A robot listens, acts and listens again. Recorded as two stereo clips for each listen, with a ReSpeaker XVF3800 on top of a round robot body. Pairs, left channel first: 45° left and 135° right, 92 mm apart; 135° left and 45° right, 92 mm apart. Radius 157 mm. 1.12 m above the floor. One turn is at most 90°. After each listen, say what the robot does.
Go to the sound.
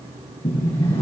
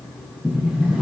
Turn 25° left.
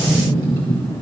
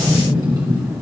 Drive 1.0 m forward.
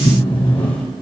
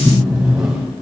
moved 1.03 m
Turn 10° left.
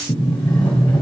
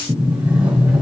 Drive 1.0 m forward.
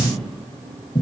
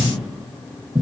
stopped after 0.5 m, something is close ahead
Arrived at the sliding door, straight ahead.